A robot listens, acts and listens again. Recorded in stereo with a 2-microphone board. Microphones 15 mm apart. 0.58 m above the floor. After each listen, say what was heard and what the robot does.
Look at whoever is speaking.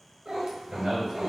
The man speaking: about 65° right or 115° right. Turn 65° right.
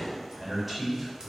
So it is at 10° right. Turn 10° right.
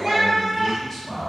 Found it: a man speaking, straight ahead, 1 to 2 m away.